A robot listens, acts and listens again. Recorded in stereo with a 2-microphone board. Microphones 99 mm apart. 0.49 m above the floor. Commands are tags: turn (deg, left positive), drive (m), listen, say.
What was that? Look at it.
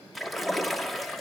<turn deg="30"/>
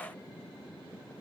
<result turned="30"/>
<listen/>
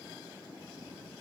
<say>I heard a splash, but can't make it out now. It was about 30° right or 150° left.</say>